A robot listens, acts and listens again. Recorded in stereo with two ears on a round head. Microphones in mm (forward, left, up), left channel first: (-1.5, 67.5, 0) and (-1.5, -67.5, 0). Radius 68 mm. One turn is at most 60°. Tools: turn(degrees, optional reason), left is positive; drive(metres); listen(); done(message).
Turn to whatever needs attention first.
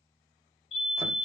turn(degrees=40, reason="The fire alarm: about 40° left or 140° left.")
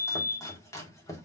turn(degrees=60, reason="So it is at 95° left.")
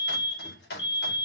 turn(degrees=40, reason="The fire alarm is now 40° left.")
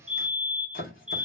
done("Facing the fire alarm, 2 to 4 m away.")